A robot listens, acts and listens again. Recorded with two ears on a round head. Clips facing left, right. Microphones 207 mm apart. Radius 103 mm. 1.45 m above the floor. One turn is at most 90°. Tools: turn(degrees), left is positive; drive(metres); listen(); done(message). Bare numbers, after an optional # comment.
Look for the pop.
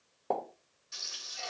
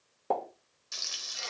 turn(-30)
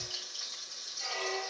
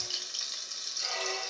listen()
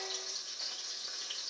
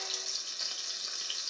done("I heard a pop, but can't make it out now. It was about 20° left or 140° right.")